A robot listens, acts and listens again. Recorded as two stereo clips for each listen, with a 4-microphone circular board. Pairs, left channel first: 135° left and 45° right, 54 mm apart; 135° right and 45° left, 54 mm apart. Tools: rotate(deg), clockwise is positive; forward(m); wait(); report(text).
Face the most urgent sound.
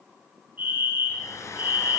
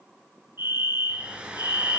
rotate(-15)
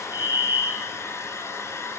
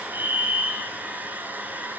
report("Facing the fire alarm, 2 to 4 m away.")